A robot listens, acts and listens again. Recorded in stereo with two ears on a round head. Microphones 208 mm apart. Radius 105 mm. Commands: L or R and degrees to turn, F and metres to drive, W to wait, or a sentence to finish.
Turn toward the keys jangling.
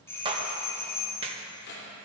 L40
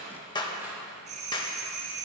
W
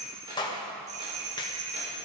W
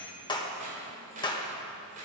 R30
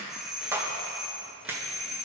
W
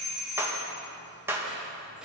W
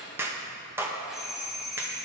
Found it: keys jangling, straight ahead.